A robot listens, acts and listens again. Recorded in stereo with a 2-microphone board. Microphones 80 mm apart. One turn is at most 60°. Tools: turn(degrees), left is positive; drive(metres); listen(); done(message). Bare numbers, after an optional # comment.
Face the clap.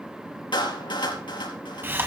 turn(60)
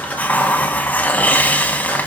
# Nothing new. It was at 30° left.
turn(30)
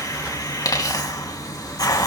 listen()
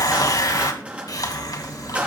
# The clap is now 15° right.
turn(-15)
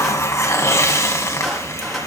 listen()
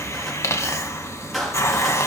listen()
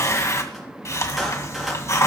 done("I heard a clap from this way, but can't make it out now.")